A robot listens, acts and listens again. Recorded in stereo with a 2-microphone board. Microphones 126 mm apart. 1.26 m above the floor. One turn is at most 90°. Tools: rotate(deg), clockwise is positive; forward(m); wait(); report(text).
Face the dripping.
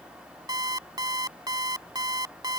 wait()
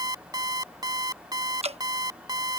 rotate(55)
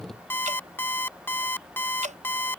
wait()
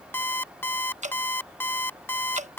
rotate(70)
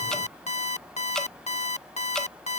report("Facing the dripping.")